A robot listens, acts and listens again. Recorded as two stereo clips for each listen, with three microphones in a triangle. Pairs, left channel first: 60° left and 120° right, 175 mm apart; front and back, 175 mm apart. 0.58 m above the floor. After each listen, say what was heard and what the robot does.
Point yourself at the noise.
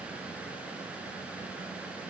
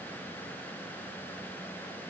Keep listening.
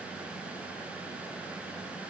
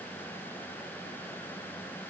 Keep listening.
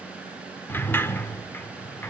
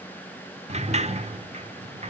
The sliding door: 135° left. Turn 135° left.
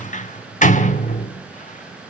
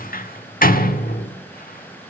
The sliding door is now 20° left. Turn 20° left.
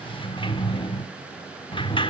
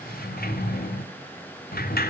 Found it: a sliding door, straight ahead.